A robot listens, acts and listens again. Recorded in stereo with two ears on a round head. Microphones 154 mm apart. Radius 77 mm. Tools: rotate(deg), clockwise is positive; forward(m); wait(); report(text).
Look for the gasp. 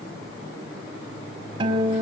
wait()
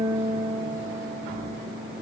wait()
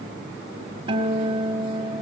report("I can't make out a gasp, only a guitar.")